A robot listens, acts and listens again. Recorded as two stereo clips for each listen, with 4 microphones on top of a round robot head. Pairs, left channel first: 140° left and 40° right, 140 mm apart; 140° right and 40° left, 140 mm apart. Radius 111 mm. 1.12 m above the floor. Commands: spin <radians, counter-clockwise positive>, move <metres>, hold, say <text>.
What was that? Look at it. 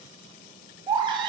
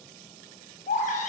spin -1.75
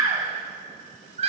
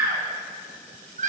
say Facing the baby crying.